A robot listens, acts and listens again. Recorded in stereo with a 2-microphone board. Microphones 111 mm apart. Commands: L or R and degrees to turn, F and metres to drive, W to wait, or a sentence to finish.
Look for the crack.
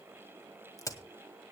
L30
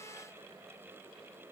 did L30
W
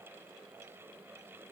I heard a crack, but can't make it out now. It was about straight ahead or 120° left.